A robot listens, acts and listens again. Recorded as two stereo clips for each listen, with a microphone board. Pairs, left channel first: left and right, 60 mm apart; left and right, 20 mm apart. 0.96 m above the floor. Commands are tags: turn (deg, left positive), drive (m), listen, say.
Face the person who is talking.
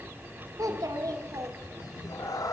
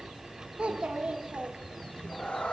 <turn deg="-90"/>
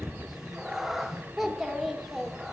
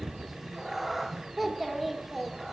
<say>Found it: a child speaking, straight ahead, 1 to 2 m away.</say>